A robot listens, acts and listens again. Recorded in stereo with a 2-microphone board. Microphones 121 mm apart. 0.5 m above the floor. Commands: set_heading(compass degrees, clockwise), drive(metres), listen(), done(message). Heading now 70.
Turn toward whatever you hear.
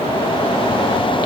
listen()
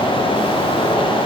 listen()
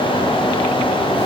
done("I can't make out anything.")